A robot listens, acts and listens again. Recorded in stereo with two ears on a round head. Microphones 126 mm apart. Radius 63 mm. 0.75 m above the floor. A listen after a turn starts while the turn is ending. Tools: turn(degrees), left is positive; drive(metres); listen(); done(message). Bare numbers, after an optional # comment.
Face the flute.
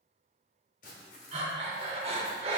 listen()
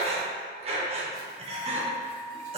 # The flute: about 55° left or 125° left.
turn(55)
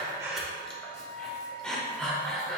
# So it is at 70° left.
turn(70)
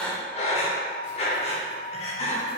# The flute is now 25° left.
turn(25)
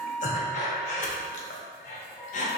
# The flute is now 15° left.
turn(15)
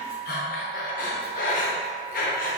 done("Found it: a flute, straight ahead, 1 to 2 m away.")